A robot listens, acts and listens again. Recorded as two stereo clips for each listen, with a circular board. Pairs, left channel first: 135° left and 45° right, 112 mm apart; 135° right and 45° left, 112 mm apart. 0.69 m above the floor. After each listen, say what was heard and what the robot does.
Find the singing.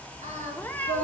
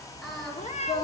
The singing: 45° right. Turn 45° right.
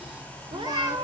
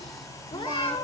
Keep listening.
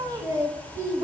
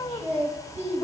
The singing is now 15° left. Turn 15° left.
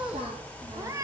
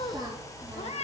Found it: singing, straight ahead.